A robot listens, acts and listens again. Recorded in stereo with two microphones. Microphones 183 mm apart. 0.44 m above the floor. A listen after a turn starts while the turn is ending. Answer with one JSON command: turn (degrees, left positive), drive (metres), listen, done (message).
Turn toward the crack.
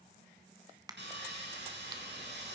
{"turn": -20}
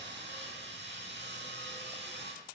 {"listen": true}
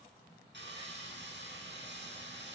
{"done": "I heard a crack, but can't make it out now. It was about straight ahead or 140° right."}